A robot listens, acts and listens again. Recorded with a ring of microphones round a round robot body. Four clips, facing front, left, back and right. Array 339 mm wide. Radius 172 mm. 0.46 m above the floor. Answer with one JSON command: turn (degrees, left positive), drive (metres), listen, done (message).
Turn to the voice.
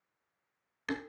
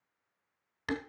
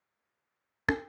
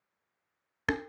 {"listen": true}
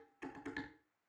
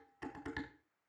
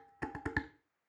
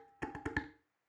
{"listen": true}
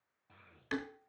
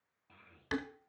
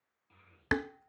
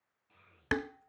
{"turn": 35}
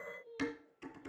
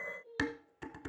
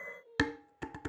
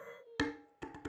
{"done": "Facing the child speaking, 2 to 4 m away."}